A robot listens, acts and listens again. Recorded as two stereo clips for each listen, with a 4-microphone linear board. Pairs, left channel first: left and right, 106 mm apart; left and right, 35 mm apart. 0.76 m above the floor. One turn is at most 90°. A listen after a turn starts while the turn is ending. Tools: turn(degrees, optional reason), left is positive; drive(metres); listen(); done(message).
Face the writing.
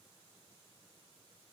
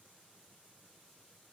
listen()
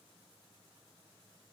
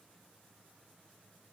listen()
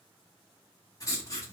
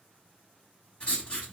turn(degrees=35, reason="The writing: about 35° left or 145° left.")
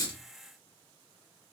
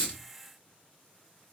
listen()
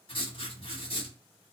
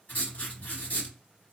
turn(degrees=90, reason="So it is at 105° left.")
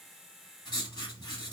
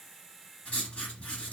turn(degrees=45, reason="The writing is now 45° left.")
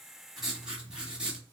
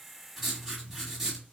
turn(degrees=-10, reason="The writing is now 10° right.")
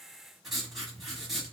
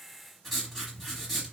done("Facing the writing.")